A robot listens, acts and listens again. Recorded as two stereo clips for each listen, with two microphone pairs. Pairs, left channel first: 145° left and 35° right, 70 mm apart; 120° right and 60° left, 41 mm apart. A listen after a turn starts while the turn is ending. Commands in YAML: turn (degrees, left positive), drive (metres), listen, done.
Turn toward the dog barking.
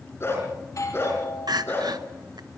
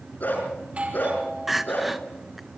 turn: -155
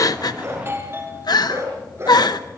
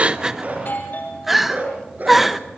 turn: 15
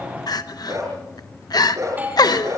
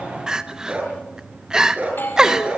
done: "Facing the dog barking, over 4 m away."